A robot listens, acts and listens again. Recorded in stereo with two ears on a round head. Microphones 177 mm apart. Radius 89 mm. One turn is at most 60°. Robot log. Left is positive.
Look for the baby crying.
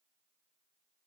cmd idle
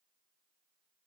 cmd idle
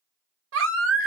note: The baby crying: about 70° right or 110° right.
cmd yaw -60
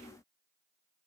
cmd idle
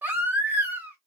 note: So it is at 10° right.
cmd yaw -10
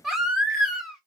end: Facing the baby crying, 1 to 2 m away.